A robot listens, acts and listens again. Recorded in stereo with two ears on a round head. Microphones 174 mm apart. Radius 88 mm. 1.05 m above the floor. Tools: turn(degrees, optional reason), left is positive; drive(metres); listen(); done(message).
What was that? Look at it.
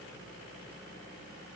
listen()
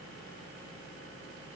listen()
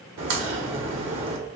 turn(degrees=-70, reason="The crack: about 70° right or 110° right.")
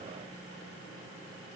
listen()
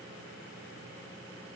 done("I heard a crack, but can't make it out now. It was about straight ahead or 40° right.")